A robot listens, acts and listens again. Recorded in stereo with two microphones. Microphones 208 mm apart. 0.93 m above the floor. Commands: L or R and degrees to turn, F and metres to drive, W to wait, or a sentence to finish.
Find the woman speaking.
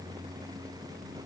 W
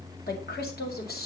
L50
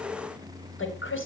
L80
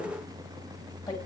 W
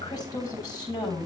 L20
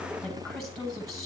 Found it: a woman speaking, straight ahead, over 4 m away.